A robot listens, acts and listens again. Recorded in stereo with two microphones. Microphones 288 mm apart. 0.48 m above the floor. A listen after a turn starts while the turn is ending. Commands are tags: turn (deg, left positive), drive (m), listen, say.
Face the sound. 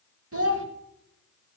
<turn deg="-50"/>
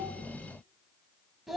<say>Facing the child speaking, 1 to 2 m away.</say>